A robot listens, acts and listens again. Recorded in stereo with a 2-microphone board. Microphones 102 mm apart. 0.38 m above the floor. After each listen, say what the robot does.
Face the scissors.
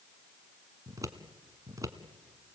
Turn 35° right.
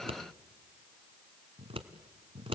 Turn 115° right.
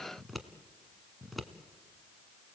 Facing the scissors.